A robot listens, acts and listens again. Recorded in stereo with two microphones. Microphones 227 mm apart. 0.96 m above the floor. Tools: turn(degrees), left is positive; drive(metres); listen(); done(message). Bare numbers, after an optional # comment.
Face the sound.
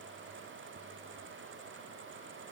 listen()
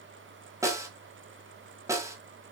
turn(-30)
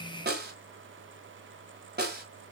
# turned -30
# So it is at 130° right.
turn(-130)
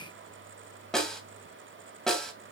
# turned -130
done("Facing the snare drum.")